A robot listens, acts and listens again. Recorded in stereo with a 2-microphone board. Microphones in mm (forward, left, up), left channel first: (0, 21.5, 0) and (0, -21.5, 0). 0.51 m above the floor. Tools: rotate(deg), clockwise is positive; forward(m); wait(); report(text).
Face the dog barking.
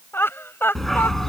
rotate(-30)
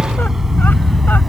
rotate(-30)
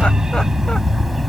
rotate(-30)
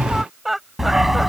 rotate(-30)
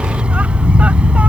rotate(25)
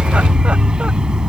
rotate(20)
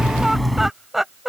report("Found it: a dog barking, straight ahead.")